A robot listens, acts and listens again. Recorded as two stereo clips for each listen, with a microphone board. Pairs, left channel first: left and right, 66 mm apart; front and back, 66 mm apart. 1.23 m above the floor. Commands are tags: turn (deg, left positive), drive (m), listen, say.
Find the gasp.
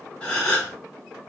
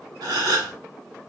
<turn deg="165"/>
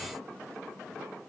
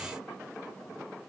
<say>I heard a gasp from this way, but can't make it out now.</say>